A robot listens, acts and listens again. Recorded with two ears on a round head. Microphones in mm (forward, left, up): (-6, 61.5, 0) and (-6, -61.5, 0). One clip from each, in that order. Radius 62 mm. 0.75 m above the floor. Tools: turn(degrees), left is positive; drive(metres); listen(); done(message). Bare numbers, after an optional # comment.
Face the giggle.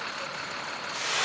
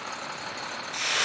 listen()
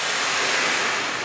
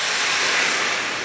listen()
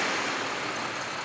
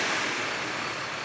done("I can't make out a giggle to turn to.")